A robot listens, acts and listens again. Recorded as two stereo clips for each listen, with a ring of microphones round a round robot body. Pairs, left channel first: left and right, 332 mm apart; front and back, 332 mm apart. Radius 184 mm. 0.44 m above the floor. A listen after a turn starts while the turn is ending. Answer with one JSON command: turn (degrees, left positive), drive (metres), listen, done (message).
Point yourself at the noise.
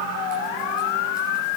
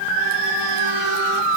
{"listen": true}
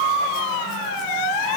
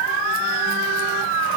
{"listen": true}
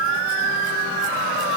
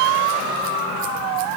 {"done": "I can't make out anything to turn to."}